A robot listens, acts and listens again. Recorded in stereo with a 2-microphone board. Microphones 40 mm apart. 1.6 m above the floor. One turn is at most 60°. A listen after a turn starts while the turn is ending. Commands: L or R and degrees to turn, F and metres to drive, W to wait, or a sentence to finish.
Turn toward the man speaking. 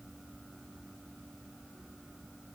W
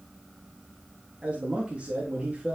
R30
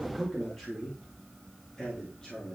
L15
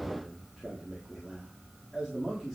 Found it: a man speaking, straight ahead.